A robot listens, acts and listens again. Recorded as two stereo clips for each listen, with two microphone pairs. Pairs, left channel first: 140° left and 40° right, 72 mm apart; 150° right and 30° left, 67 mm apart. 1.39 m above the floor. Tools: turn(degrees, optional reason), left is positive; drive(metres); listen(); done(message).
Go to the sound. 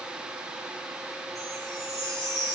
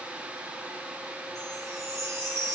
turn(degrees=-10, reason="The chime: 10° right.")
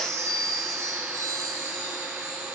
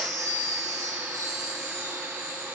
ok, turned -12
drive(metres=1.0)
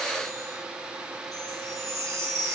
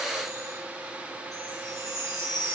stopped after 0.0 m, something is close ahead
done("Blocked. The chime is further on, straight ahead.")